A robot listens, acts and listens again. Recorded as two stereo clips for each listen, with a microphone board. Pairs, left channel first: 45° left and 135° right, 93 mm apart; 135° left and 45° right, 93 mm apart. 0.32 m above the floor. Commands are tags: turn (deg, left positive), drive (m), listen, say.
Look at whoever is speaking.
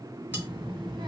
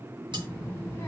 <turn deg="-165"/>
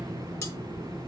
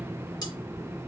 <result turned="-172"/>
<say>Facing the child speaking, 2 to 4 m away.</say>